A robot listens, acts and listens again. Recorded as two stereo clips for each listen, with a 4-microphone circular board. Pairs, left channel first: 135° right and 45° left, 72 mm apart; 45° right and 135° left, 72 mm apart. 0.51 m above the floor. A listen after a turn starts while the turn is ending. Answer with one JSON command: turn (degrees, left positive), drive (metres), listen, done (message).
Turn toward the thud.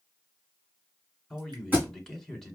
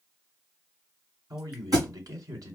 {"turn": 105}
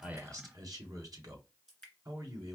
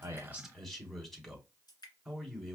{"done": "Facing where the thud came from. I can't hear it now."}